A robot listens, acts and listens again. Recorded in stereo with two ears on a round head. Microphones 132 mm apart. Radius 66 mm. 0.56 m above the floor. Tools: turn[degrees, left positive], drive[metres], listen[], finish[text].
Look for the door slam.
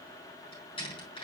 Thought: The door slam: about 35° left or 145° left.
Action: turn[35]
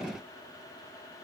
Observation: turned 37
Action: listen[]
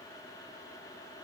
Action: finish[I heard a door slam, but can't make it out now. It was about 5° right or 110° left.]